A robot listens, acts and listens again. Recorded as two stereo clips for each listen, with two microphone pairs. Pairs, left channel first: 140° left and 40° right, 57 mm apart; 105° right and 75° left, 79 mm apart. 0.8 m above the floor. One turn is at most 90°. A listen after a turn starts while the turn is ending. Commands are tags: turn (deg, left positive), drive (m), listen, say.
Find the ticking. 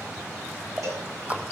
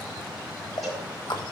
<turn deg="-90"/>
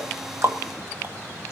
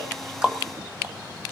<turn deg="-15"/>
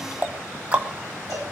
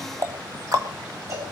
<turn deg="25"/>
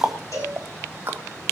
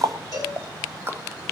<turn deg="15"/>
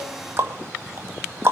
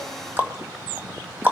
<say>Found it: ticking, straight ahead, 1 to 2 m away.</say>